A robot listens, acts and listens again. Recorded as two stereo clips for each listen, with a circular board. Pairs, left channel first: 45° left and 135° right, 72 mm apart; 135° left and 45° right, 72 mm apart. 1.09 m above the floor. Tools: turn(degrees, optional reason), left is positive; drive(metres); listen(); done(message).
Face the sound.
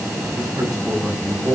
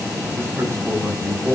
turn(degrees=-105, reason="The man speaking: 105° right.")
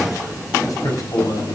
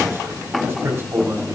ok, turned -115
done("Found it: a man speaking, straight ahead.")